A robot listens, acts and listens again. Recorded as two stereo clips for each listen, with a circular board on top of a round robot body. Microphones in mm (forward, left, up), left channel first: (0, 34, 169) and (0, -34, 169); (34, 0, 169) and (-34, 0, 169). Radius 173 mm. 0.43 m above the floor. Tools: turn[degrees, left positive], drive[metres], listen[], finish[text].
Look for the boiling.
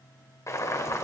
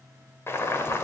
Thought: The boiling: 50° left.
Action: turn[50]
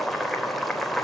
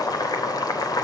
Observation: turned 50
Action: finish[Facing the boiling, 2 to 4 m away.]